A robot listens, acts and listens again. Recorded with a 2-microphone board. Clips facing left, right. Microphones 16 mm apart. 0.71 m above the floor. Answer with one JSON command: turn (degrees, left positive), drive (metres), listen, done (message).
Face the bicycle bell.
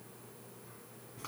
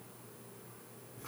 {"listen": true}
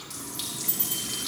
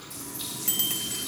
{"turn": -65}
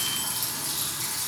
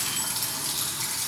{"listen": true}
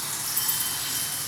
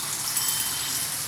{"turn": -45}
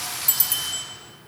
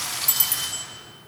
{"done": "Facing the bicycle bell."}